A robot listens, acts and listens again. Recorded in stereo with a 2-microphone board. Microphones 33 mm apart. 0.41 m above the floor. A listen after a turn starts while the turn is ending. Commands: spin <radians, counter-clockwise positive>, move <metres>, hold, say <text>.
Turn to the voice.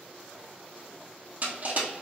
hold
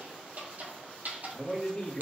spin 0.61
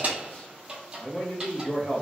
spin 1.75
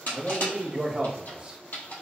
spin -0.44
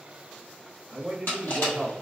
say Facing the man speaking.